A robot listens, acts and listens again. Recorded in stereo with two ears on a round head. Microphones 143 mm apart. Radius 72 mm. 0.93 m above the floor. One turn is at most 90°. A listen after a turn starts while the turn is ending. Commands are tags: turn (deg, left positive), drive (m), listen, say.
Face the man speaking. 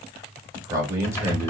<turn deg="-15"/>
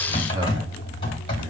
<listen/>
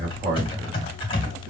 <turn deg="-30"/>
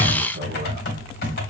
<turn deg="-90"/>
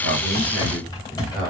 <turn deg="-25"/>
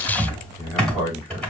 <turn deg="-10"/>
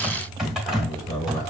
<say>Found it: a man speaking, straight ahead, over 4 m away.</say>